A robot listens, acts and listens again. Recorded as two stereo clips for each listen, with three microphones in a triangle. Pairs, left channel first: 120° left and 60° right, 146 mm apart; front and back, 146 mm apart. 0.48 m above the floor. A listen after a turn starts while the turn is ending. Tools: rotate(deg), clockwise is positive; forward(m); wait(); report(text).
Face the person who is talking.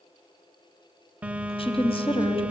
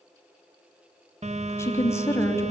rotate(-70)
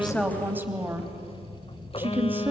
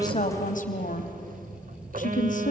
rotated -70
rotate(-15)
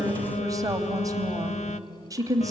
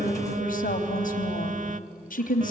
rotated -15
report("Facing the woman speaking, 2 to 4 m away.")